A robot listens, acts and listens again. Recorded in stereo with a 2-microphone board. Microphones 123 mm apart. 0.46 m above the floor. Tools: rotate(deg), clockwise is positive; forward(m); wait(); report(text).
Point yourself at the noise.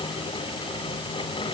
wait()
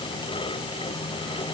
wait()
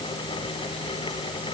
report("I can't make out anything to turn to.")